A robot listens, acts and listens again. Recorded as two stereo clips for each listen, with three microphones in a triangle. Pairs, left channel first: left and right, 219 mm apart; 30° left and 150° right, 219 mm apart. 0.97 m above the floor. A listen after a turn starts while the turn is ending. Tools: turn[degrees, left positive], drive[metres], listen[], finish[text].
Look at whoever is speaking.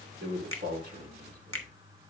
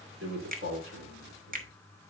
Thought: The man speaking: 130° right.
Action: turn[-130]
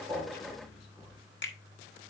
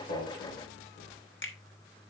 Action: listen[]
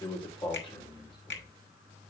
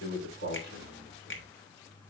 Thought: The man speaking is now 25° left.
Action: turn[25]
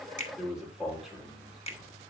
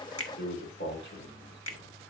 Action: finish[Found it: a man speaking, straight ahead, 2 to 4 m away.]